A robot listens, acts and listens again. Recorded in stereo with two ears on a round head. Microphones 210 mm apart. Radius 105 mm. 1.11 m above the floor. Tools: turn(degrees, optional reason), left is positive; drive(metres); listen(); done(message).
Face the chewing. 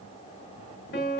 listen()
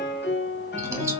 turn(degrees=-30)
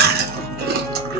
turn(degrees=-135, reason="So it is at 135° right.")
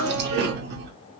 turn(degrees=-45, reason="The chewing is now 45° right.")
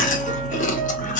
turn(degrees=35, reason="The chewing is now 35° left.")
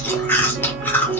turn(degrees=10, reason="The chewing is now 10° left.")
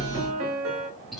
done("Facing the chewing, under 1 m away.")